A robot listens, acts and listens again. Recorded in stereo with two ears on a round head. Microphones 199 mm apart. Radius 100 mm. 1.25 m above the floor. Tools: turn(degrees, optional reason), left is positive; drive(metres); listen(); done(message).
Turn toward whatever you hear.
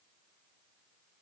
listen()
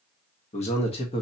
turn(degrees=25, reason="The man speaking: about 25° left or 155° left.")
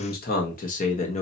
turn(degrees=35, reason="The man speaking: about 35° left or 145° left.")
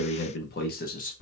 turn(degrees=40, reason="The man speaking: about 40° left or 140° left.")
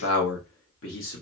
turn(degrees=120, reason="So it is at 120° left.")
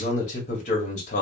turn(degrees=35, reason="The man speaking is now 35° left.")
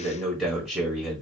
done("Facing the man speaking.")